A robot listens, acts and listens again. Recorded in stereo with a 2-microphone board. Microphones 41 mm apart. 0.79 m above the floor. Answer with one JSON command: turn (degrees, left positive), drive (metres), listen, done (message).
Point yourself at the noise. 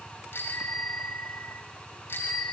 {"turn": 55}
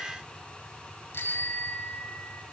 {"turn": 65}
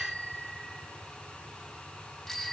{"turn": 10}
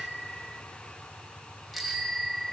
{"done": "Found it: a bicycle bell, straight ahead, 2 to 4 m away."}